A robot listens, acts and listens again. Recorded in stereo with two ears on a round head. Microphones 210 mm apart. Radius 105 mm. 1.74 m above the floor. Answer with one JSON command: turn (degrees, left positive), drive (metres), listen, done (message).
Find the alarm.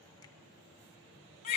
{"listen": true}
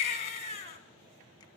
{"listen": true}
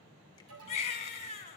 {"turn": -90}
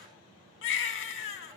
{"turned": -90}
{"listen": true}
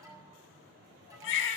{"turn": -15}
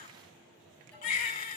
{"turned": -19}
{"done": "Facing the alarm."}